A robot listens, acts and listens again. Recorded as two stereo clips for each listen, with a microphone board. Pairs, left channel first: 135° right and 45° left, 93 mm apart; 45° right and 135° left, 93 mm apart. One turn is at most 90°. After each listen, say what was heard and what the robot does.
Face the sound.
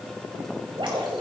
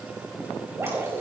The dripping: 70° left. Turn 70° left.
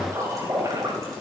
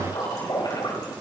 Found it: dripping, straight ahead.